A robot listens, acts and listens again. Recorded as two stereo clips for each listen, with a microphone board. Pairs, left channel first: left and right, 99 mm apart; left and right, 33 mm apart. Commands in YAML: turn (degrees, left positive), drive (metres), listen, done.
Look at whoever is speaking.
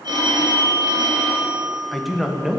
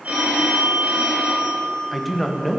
turn: -30
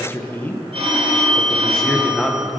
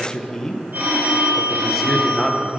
turn: 30
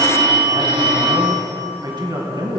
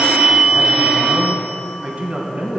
turn: -45
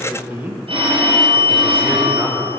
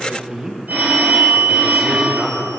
turn: -20
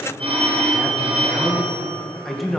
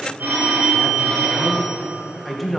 done: "Found it: a man speaking, straight ahead, 2 to 4 m away."